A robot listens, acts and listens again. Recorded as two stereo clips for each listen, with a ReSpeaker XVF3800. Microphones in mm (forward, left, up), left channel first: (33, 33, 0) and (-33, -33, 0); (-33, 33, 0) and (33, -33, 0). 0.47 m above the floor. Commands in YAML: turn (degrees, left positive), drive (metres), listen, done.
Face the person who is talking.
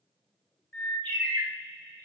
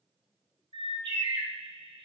listen: true
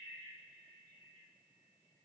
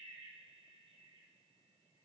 listen: true
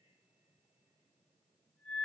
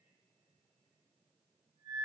done: "I can't make out anyone speaking, only a bird."